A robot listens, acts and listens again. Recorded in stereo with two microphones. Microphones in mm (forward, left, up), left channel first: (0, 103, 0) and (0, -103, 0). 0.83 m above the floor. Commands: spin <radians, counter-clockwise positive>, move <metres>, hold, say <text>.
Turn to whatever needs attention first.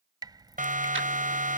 spin -0.70
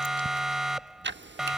say Found it: a siren, straight ahead.